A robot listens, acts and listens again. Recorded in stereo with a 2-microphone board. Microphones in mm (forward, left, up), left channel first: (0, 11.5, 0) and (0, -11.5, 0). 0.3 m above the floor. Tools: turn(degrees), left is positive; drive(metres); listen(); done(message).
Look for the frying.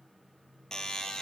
listen()
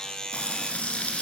turn(degrees=70)
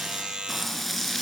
done("Found it: frying, straight ahead, 2 to 4 m away.")